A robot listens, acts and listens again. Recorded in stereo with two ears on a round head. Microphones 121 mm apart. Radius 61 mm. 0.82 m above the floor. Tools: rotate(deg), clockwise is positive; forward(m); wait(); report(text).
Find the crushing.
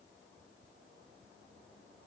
wait()
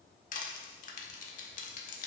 rotate(-60)
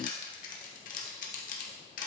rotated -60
rotate(-60)
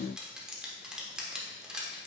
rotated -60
report("Facing the crushing.")